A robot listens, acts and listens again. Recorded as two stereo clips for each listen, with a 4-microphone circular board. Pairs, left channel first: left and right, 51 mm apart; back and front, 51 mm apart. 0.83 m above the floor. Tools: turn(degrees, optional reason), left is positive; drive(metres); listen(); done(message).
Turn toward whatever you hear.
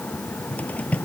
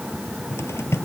turn(degrees=150, reason="The cupboard door: 150° left.")
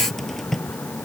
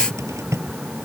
done("Facing the cupboard door.")